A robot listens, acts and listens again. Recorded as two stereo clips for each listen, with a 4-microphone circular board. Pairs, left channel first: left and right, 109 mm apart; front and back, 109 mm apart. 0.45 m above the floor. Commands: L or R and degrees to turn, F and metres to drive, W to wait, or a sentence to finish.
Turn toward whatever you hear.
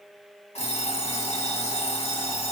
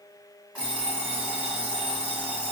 L100
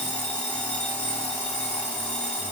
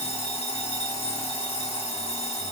L15
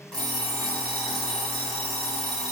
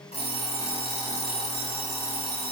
Facing the alarm clock.